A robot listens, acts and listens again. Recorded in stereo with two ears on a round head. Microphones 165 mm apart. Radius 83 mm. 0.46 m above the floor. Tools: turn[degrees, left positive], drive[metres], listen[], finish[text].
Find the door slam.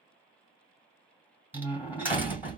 Action: turn[-30]
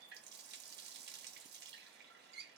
Action: listen[]
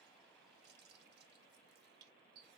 Action: finish[I heard a door slam, but can't make it out now. It was about 20° left or 140° right.]